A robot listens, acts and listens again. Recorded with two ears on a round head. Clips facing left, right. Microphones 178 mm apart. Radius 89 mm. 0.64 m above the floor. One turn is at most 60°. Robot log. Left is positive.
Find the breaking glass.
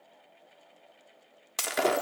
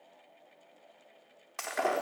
note: The breaking glass: about 45° left or 135° left.
cmd yaw +45
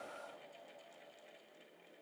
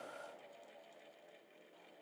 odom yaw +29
cmd idle
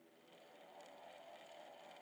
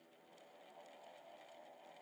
end: I heard breaking glass, but can't make it out now. It was about 15° left or 105° left.